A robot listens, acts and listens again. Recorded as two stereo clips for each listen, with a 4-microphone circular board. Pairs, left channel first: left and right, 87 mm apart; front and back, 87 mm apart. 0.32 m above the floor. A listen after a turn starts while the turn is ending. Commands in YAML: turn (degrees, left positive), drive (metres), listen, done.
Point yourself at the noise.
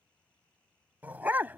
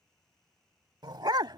turn: -155
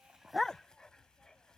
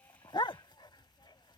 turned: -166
turn: 10
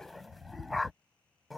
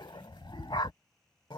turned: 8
done: "Facing the dog barking."